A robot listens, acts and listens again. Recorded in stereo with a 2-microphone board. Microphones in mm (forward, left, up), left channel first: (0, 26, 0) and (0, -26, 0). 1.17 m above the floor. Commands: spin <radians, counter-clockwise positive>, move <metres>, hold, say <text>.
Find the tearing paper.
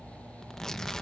spin 0.52
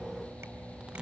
hold
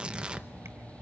spin -0.35
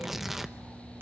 say Facing the tearing paper, under 1 m away.